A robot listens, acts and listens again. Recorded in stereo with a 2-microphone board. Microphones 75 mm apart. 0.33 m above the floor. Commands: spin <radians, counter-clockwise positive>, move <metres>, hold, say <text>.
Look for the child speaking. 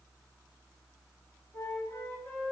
hold
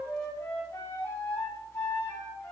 hold
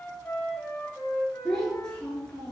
spin 0.52
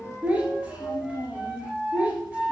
spin -0.26
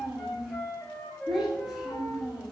say Found it: a child speaking, straight ahead, 2 to 4 m away.